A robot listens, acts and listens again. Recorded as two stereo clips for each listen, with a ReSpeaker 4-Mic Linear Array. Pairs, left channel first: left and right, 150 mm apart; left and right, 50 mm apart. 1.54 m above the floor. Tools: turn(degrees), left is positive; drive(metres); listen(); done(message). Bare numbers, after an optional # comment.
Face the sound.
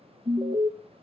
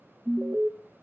# The alarm: about 30° right or 150° right.
turn(-30)
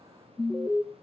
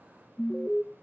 done("Found it: an alarm, straight ahead, 1 to 2 m away.")